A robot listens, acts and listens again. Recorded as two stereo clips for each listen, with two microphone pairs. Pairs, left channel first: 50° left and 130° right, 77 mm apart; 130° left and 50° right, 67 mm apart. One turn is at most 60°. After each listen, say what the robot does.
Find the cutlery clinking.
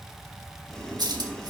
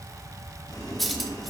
Turn 60° right.
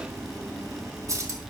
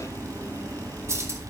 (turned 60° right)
Turn 60° right.
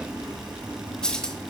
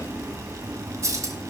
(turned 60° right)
Turn 30° right.
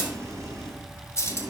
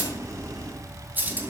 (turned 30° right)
Facing the cutlery clinking, 1 to 2 m away.